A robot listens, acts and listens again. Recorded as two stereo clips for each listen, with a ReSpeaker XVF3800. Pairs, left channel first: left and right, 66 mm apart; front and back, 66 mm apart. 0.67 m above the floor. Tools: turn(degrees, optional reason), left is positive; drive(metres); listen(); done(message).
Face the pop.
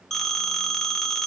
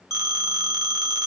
listen()
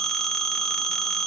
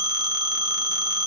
listen()
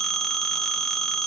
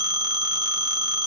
done("I can't make out a pop to turn to.")